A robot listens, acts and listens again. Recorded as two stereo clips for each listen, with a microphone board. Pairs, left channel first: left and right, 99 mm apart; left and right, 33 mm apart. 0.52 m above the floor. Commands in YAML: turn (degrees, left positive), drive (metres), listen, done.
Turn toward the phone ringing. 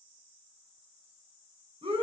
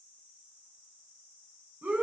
listen: true
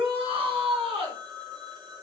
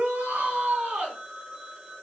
turn: -45
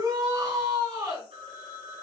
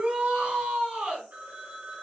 turn: -85
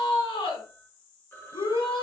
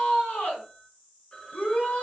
turn: 20
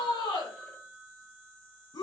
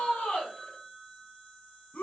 done: "Found it: a phone ringing, straight ahead."